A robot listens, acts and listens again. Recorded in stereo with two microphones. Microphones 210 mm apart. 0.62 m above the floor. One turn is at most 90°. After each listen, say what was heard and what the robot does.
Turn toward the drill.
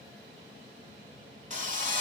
The drill: about 40° right or 140° right. Turn 40° right.
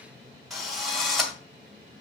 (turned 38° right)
Facing the drill, 1 to 2 m away.